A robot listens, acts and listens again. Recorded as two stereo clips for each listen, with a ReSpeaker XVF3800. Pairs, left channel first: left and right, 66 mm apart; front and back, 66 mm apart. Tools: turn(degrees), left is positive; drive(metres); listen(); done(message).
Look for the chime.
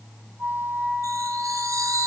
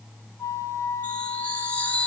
turn(degrees=-65)
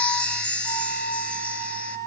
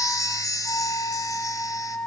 turn(degrees=20)
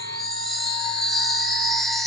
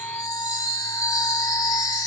done("Found it: a chime, straight ahead, 2 to 4 m away.")